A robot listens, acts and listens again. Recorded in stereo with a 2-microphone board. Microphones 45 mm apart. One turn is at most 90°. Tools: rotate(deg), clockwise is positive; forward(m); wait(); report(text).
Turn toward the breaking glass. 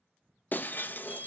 rotate(-45)
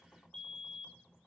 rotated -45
wait()
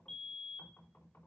report("I heard breaking glass, but can't make it out now. It was about straight ahead or 90° left.")